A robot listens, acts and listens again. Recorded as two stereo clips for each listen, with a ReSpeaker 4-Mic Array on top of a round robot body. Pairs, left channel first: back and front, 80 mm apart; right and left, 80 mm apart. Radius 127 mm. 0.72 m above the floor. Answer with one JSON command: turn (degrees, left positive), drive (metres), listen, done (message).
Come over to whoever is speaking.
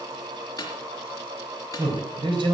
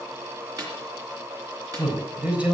{"turn": 15}
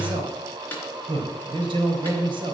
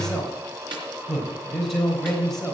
{"drive": 1.0}
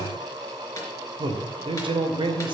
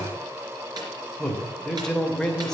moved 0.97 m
{"drive": 1.0}
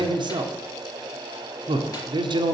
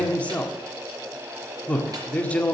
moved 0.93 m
{"turn": -15}
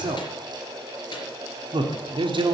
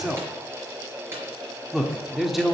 {"drive": 1.0}
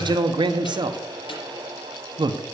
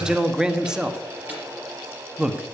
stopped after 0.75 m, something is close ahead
{"turn": 10}
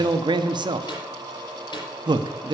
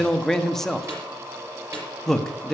{"done": "Arrived at the man speaking, straight ahead."}